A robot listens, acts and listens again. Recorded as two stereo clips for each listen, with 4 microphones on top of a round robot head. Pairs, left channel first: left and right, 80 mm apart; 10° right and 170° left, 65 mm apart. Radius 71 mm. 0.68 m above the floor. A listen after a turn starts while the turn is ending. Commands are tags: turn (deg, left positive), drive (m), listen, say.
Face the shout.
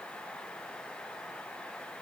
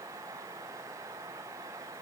<listen/>
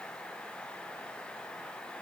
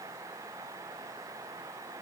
<listen/>
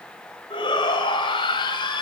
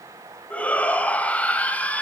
<turn deg="60"/>
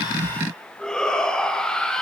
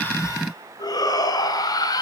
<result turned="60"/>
<say>Found it: a shout, straight ahead.</say>